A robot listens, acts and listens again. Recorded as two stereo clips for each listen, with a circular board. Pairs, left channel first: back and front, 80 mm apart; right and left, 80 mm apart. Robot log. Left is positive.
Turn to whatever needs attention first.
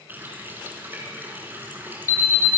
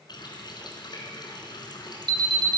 note: The alarm: 125° left.
cmd yaw +125
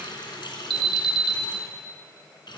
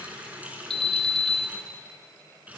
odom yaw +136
note: The alarm is now 10° right.
cmd yaw -10
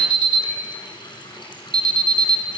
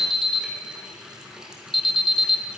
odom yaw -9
end: Found it: an alarm, straight ahead.